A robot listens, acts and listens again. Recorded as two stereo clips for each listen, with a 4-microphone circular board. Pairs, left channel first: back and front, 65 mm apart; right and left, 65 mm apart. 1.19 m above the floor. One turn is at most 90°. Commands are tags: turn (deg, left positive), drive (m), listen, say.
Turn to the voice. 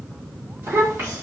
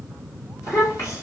<turn deg="-55"/>
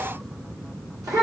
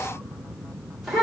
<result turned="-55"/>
<say>Found it: a child speaking, straight ahead.</say>